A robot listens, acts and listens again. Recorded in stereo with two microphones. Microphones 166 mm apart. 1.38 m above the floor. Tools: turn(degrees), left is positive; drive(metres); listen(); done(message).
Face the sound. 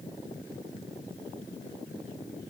listen()
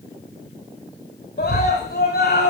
turn(degrees=70)
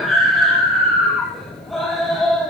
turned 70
done("Found it: a scream, straight ahead.")